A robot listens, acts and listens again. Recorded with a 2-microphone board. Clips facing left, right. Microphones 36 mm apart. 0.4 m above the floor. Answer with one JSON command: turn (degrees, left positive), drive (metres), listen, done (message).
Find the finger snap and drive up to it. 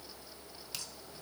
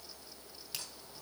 {"listen": true}
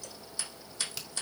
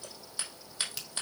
{"turn": -30}
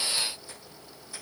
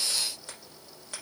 {"listen": true}
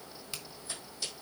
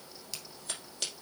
{"turn": 25}
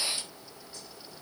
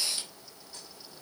{"listen": true}
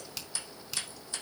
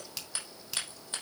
{"drive": 1.0}
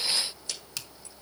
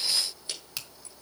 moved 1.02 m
{"turn": -10}
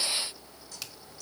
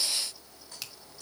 {"drive": 1.0}
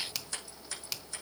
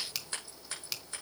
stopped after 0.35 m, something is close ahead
{"done": "Arrived at the finger snap, straight ahead."}